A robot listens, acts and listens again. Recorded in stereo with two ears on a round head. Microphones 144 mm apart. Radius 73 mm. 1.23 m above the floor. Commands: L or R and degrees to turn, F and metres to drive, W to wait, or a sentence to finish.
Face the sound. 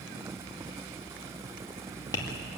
L20
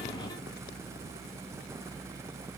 W
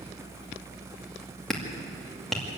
Found it: tapping, straight ahead, 2 to 4 m away.